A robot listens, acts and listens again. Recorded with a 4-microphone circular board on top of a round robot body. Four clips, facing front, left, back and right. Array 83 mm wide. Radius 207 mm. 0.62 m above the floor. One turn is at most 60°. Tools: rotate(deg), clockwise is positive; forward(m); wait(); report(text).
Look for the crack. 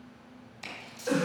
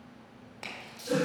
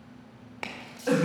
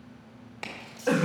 rotate(60)
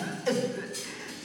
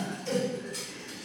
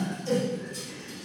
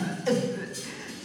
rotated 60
rotate(60)
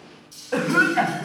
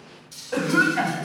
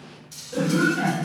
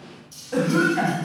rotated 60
rotate(50)
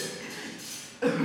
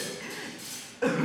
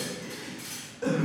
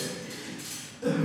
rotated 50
report("I heard a crack from this way, but can't make it out now.")